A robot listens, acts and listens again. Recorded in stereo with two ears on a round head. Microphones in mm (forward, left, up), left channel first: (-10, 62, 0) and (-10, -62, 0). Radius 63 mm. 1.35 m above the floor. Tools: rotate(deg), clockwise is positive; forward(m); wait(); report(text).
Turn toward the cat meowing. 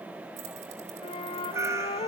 rotate(25)
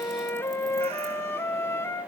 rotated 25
wait()
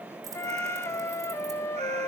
wait()
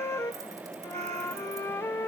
report("I heard a cat meowing, but can't make it out now. It was about straight ahead or 130° right.")